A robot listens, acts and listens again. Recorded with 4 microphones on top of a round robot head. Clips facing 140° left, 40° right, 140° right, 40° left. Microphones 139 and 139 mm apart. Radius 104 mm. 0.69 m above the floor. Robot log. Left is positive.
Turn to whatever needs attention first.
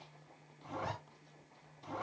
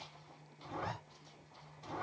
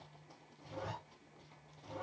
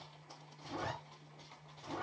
cmd idle
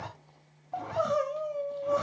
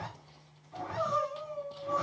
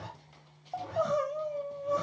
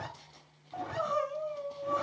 note: The crying: 165° left.
cmd yaw +165
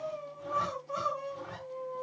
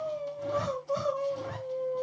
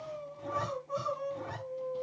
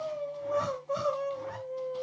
note: The crying is now 15° left.
cmd yaw +15
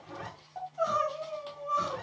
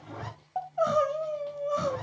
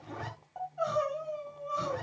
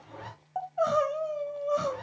end: Found it: crying, straight ahead, 2 to 4 m away.